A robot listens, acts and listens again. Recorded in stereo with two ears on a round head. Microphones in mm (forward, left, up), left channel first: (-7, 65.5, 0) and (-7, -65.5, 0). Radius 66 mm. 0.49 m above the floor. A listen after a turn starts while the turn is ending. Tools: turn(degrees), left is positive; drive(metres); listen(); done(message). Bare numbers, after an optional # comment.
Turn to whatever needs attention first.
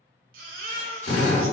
# The baby crying: about 65° right or 115° right.
turn(-65)
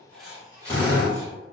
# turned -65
listen()
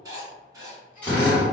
listen()
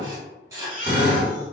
# So it is at 15° right.
turn(-15)
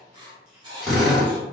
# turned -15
listen()
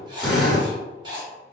listen()
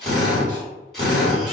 done("Facing where the baby crying came from. I can't hear it now.")